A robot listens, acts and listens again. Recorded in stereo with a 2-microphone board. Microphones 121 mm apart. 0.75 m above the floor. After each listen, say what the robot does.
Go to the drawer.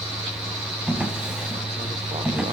Turn 30° right.
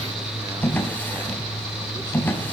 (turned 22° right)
Turn 15° left.
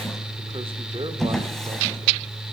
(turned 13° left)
Drive 1.0 m forward.
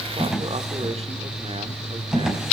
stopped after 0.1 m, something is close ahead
Something is in my way. I am facing the drawer but have not reached it.